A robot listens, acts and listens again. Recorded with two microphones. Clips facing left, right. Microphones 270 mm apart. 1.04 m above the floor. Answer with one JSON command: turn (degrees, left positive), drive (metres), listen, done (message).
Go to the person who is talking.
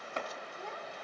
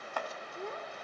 {"turn": -45}
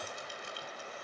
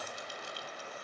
{"listen": true}
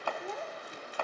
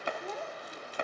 {"drive": 1.0}
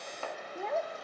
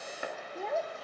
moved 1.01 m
{"drive": 1.0}
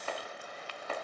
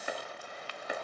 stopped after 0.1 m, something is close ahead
{"listen": true}
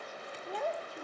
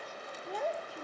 {"done": "I am next to the child speaking."}